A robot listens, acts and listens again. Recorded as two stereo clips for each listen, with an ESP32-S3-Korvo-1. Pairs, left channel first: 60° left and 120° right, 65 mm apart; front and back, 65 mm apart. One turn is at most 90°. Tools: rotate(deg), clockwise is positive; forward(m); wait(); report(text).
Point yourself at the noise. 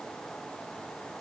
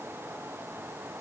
wait()
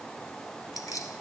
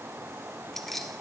rotate(-85)
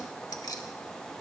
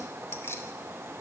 rotate(-50)
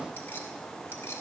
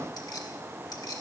rotate(-10)
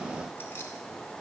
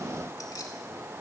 wait()
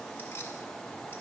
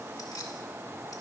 wait()
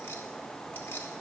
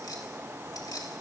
report("I heard keys jangling from this way, but can't make it out now.")